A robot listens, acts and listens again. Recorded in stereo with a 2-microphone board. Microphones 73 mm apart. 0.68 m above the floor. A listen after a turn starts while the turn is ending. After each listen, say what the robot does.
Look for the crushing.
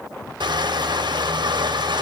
Turn 90° right.
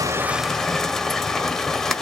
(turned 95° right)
Facing the crushing.